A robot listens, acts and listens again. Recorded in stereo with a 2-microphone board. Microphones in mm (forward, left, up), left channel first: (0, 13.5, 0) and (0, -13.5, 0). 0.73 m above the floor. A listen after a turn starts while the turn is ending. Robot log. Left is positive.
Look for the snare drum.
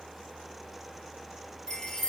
cmd idle
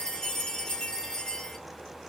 cmd idle
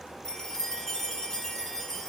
end: I can't make out a snare drum to turn to.